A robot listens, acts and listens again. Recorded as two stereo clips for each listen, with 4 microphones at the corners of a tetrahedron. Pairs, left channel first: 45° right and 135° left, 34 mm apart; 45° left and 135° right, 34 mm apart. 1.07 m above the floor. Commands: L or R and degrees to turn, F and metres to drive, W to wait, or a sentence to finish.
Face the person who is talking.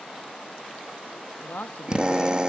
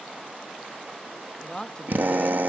R20
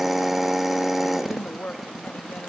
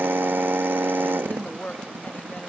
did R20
Facing the woman speaking.